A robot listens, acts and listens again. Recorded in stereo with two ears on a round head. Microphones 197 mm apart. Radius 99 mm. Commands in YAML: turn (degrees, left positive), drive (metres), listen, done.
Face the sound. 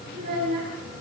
turn: -40
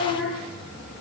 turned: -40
done: "Found it: a child speaking, straight ahead, over 4 m away."